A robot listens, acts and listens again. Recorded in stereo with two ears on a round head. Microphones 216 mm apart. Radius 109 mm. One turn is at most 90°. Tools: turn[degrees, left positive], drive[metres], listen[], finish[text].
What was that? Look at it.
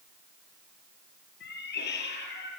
Thought: The cat meowing: about 50° left or 130° left.
Action: turn[50]
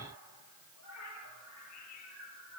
Thought: So it is at 85° left.
Action: turn[85]
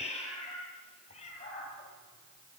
Thought: The cat meowing is now 30° left.
Action: turn[30]
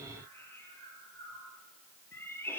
Thought: The cat meowing is now 10° left.
Action: turn[10]
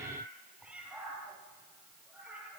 Action: finish[Facing the cat meowing.]